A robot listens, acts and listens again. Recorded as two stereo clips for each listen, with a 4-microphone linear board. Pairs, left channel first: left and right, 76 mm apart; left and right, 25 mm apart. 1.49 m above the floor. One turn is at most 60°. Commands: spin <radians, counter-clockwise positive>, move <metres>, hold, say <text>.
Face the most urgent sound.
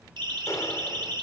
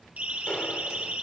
spin -1.05
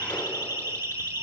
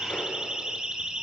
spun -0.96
spin -0.52
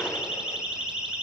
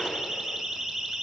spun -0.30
spin -0.17
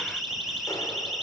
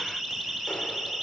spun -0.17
say Facing the siren.